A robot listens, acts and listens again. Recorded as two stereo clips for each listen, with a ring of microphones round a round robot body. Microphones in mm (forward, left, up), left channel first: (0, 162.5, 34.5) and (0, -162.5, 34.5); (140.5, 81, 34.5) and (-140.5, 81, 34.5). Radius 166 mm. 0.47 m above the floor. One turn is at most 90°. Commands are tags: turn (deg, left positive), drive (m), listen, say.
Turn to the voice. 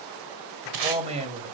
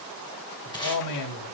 <turn deg="-20"/>
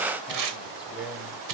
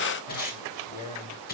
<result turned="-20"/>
<say>Found it: a man speaking, straight ahead, 2 to 4 m away.</say>